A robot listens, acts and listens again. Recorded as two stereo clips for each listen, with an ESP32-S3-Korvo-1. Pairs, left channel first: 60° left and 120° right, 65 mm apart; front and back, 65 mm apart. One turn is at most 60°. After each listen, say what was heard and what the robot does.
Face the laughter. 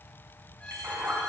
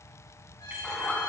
The laughter: 70° right. Turn 60° right.
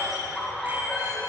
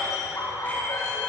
The laughter is now 25° right. Turn 25° right.
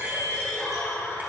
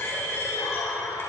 The laughter is now 10° right. Turn 10° right.
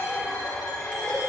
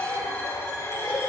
Found it: laughter, straight ahead.